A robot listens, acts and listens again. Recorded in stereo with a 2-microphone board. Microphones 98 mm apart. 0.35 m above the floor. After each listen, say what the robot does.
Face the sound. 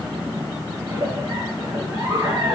Turn 40° right.
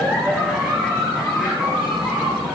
Facing the giggle.